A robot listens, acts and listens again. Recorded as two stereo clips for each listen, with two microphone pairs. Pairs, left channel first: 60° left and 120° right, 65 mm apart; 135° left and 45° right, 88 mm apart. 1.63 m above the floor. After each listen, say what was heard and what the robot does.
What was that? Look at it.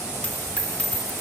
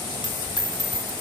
The dropped coin: 125° left. Turn 125° left.
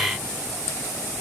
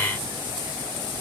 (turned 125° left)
Facing where the dropped coin came from. I can't hear it now.